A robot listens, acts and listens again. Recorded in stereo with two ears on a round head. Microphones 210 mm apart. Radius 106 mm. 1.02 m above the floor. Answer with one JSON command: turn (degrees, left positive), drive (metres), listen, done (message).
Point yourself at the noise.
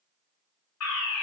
{"turn": 70}
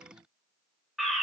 {"done": "Facing the fire alarm."}